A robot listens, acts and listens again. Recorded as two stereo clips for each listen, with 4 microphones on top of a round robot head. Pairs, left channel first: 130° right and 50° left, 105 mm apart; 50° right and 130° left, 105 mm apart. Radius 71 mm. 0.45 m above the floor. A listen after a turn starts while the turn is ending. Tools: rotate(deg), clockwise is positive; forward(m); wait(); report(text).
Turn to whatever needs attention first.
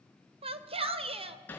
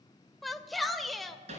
rotate(-40)
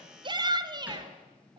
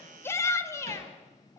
rotate(-10)
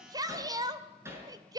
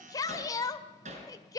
report("Facing the shout, 2 to 4 m away.")